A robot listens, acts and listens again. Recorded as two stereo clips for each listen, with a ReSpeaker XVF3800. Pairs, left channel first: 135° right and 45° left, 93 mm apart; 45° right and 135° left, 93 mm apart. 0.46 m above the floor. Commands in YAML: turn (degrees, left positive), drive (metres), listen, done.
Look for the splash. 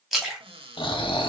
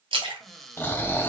turn: 130
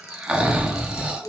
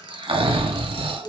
done: "I heard a splash from this way, but can't make it out now."